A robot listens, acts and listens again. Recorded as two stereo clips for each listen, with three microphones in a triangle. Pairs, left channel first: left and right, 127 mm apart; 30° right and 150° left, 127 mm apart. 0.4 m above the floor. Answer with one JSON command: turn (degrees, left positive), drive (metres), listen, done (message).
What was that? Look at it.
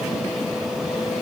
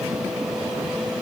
{"listen": true}
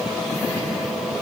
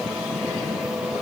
{"listen": true}
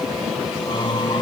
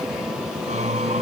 {"turn": 140}
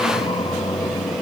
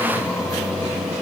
{"turn": 40}
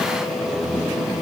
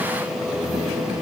{"turn": 10}
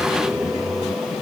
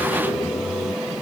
{"done": "Found it: singing, straight ahead."}